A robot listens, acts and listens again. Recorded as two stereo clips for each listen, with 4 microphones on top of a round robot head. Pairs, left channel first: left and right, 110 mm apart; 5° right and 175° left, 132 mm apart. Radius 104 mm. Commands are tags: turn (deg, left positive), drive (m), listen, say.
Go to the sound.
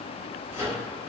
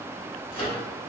<turn deg="40"/>
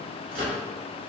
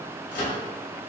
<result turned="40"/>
<turn deg="-15"/>
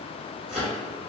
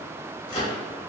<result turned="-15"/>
<drive m="1.0"/>
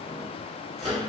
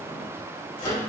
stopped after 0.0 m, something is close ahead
<turn deg="10"/>
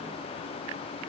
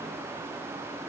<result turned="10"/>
<listen/>
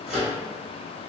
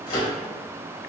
<say>Something is in my way. I am facing the microwave but have not reached it.</say>